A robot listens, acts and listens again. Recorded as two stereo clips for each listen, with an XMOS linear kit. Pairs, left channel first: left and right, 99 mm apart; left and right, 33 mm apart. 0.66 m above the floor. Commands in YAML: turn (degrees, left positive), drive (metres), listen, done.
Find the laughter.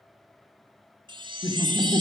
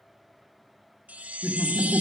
turn: 40
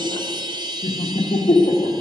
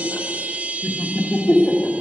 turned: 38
turn: 95
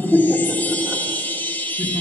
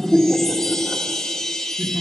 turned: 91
done: "Found it: laughter, straight ahead, 1 to 2 m away."